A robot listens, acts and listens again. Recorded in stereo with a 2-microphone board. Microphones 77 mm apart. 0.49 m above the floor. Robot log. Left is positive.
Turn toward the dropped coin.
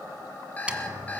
note: The dropped coin: about 15° right or 165° right.
cmd yaw -15
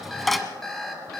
end: Facing the dropped coin.